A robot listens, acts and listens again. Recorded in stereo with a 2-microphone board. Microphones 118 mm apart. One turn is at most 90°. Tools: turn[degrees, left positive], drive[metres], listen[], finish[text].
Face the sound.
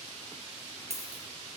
Thought: The dropped coin: about 60° right or 120° right.
Action: turn[-60]
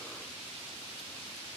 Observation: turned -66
Action: listen[]
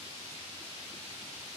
Action: finish[I heard a dropped coin, but can't make it out now. It was about 5° left or 55° right.]